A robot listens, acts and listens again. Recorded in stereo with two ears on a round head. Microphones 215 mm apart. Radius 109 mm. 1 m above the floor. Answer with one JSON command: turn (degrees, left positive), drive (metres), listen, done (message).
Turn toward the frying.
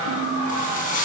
{"turn": 35}
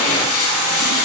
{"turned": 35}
{"turn": 110}
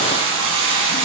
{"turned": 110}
{"turn": -20}
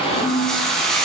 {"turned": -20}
{"done": "Found it: frying, straight ahead."}